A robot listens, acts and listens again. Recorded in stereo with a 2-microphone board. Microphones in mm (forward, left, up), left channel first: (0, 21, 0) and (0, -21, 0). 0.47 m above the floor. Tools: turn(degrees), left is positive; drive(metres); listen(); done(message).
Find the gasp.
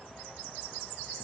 listen()
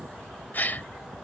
turn(degrees=45)
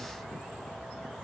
listen()
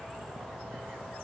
done("I heard a gasp, but can't make it out now. It was about straight ahead or 90° left.")